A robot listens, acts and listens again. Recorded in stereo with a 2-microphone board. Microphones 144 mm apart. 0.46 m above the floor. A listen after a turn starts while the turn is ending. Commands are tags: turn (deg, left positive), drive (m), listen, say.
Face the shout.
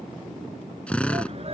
<turn deg="-45"/>
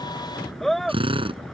<say>Found it: a shout, straight ahead.</say>